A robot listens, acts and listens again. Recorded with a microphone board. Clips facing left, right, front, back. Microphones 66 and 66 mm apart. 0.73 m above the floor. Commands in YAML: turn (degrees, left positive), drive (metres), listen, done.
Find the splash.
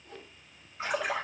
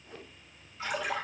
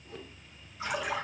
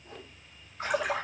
turn: 150
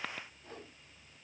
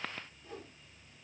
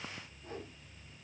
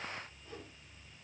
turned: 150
done: "Facing where the splash came from. I can't hear it now."